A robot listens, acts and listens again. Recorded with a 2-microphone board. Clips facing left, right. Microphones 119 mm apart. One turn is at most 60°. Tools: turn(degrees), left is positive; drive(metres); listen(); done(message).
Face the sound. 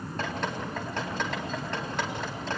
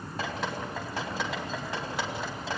turn(degrees=-30)
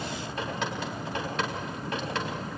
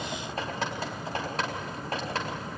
turn(degrees=-60)
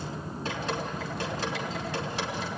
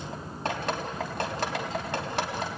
turn(degrees=-60)
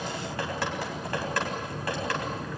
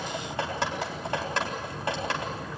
turn(degrees=-25)
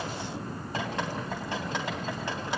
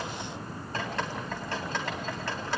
turn(degrees=15)
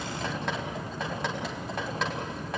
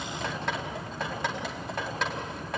done("Found it: dripping, straight ahead.")